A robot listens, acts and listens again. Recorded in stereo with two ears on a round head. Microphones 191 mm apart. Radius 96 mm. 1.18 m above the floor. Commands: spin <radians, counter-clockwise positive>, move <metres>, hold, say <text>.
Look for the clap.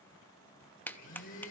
spin 0.52
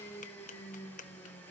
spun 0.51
spin 2.44
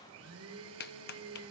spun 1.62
spin 0.87
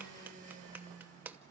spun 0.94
spin -0.17
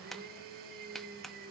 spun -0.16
say Facing the clap.